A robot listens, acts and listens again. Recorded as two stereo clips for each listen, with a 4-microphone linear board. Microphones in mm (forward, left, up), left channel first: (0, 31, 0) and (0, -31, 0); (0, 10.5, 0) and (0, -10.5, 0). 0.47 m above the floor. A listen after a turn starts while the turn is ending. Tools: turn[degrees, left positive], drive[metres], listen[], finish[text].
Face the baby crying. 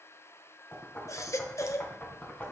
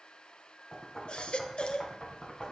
Thought: The baby crying: about 55° left or 125° left.
Action: turn[55]
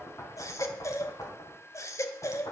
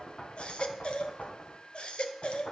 Thought: So it is at 65° left.
Action: turn[65]
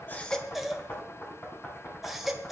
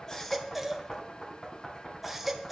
Action: finish[Found it: a baby crying, straight ahead, 1 to 2 m away.]